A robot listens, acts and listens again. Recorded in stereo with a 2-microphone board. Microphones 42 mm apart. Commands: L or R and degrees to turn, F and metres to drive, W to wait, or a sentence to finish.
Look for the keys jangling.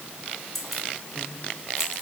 R30
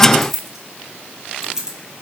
R30
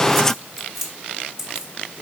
R30
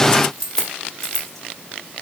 L10
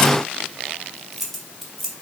Found it: keys jangling, straight ahead, 1 to 2 m away.